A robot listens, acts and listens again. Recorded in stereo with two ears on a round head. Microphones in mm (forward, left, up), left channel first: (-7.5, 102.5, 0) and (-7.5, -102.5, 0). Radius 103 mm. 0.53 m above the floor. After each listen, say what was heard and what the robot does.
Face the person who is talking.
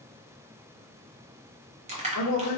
The man speaking: about 60° left or 120° left. Turn 60° left.
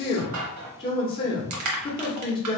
So it is at 25° left. Turn 25° left.
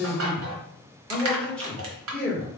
Facing the man speaking, 1 to 2 m away.